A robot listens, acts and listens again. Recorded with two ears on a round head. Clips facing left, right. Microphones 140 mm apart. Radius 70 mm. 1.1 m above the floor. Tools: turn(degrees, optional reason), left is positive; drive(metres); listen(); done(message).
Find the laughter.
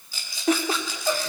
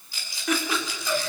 turn(degrees=35, reason="The laughter: about 35° left or 145° left.")
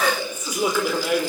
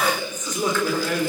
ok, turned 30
turn(degrees=15, reason="So it is at 15° left.")
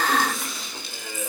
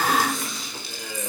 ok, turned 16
done("Found it: laughter, straight ahead.")